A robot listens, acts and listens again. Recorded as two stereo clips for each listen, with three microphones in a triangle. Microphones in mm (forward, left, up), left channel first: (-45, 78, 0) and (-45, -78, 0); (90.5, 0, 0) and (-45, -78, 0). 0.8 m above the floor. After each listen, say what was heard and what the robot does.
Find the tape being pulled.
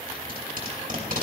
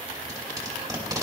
The tape being pulled: 85° right. Turn 85° right.
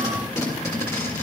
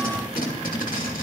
The tape being pulled is now 20° left. Turn 20° left.
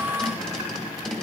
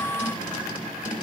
Facing the tape being pulled.